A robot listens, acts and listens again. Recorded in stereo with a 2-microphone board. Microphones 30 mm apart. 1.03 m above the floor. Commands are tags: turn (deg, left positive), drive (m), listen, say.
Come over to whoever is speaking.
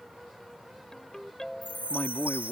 <turn deg="75"/>
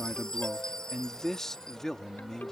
<turn deg="15"/>
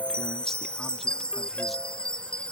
<listen/>
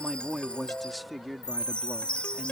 <drive m="1.0"/>
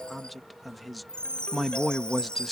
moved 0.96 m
<drive m="1.0"/>
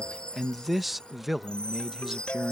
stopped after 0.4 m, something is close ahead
<turn deg="-10"/>
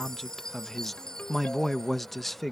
<say>I am next to the man speaking.</say>